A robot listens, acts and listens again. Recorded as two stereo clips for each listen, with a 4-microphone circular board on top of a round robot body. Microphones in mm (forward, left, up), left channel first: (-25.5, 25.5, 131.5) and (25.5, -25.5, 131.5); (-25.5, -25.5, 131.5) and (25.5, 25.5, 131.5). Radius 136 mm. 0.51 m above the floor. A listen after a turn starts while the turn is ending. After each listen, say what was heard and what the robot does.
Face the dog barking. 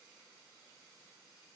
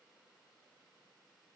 Keep listening.
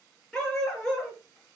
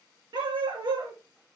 The dog barking: 50° left. Turn 50° left.
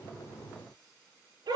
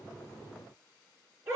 The dog barking is now 10° right. Turn 10° right.
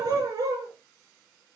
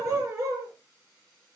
Facing the dog barking, over 4 m away.